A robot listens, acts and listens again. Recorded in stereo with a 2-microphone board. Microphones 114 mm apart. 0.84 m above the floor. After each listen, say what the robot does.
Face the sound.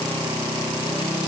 Keep listening.
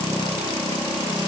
Keep listening.
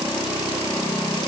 I can't make out anything to turn to.